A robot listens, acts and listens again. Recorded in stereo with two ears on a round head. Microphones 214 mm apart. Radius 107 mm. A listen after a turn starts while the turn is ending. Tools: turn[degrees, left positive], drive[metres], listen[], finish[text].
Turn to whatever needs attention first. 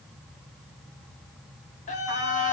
Thought: The scream: about 35° left or 145° left.
Action: turn[35]
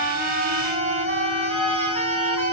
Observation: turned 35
Thought: So it is at 110° left.
Action: turn[110]
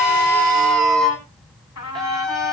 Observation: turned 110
Action: finish[Found it: a scream, straight ahead.]